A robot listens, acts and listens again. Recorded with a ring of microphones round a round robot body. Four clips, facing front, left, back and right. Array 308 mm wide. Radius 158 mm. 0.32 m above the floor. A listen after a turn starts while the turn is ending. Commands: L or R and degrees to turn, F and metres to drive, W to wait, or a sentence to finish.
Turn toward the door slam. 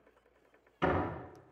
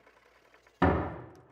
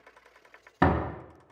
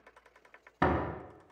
R175
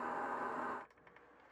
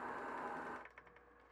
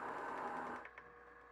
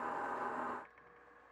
I heard a door slam from this way, but can't make it out now.